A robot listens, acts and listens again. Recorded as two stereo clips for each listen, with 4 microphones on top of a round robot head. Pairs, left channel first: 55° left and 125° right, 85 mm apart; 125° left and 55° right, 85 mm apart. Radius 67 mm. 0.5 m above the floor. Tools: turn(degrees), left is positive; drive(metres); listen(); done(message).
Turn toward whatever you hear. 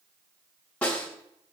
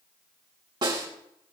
turn(degrees=-20)
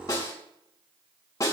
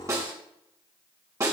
done("Found it: a snare drum, straight ahead.")